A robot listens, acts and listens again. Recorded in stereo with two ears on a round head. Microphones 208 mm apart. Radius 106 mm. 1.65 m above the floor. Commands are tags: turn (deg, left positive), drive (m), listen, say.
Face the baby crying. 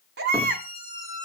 <turn deg="-50"/>
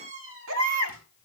<turn deg="-70"/>
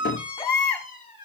<turn deg="15"/>
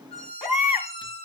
<say>Found it: a baby crying, straight ahead.</say>